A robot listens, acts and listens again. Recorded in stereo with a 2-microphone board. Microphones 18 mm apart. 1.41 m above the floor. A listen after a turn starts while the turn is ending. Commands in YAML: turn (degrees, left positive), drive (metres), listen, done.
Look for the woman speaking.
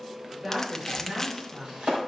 turn: -50
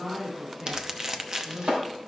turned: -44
turn: -10
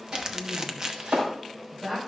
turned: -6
turn: -10
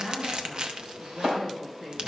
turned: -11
done: "Found it: a woman speaking, straight ahead."